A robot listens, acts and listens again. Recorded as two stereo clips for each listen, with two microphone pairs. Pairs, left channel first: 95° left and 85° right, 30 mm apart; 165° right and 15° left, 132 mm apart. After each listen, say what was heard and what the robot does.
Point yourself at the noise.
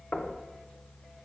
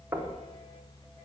The knocking: 85° left. Turn 85° left.
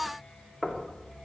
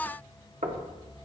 The knocking is now 25° left. Turn 25° left.
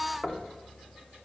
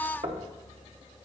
The knocking is now 15° left. Turn 15° left.
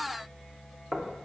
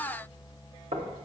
Facing the knocking, under 1 m away.